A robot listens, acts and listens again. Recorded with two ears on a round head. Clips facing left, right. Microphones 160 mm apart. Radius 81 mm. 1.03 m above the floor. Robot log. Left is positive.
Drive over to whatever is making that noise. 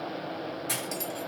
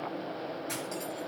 note: The cutlery clinking: about 70° left or 110° left.
cmd yaw +70
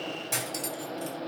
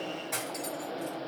note: So it is at 35° left.
cmd yaw +35
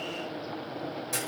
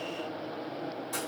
note: The cutlery clinking is now 20° left.
cmd yaw +20
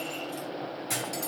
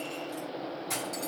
cmd fwd 1.0
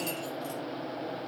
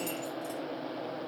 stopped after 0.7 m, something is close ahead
cmd idle
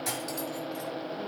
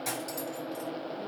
end: Something is in my way. I am facing the cutlery clinking but have not reached it.